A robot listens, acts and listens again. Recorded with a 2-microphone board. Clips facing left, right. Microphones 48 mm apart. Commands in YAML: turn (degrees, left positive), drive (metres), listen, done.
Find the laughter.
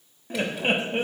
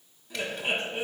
turn: 45
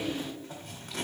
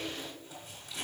done: "Facing the laughter."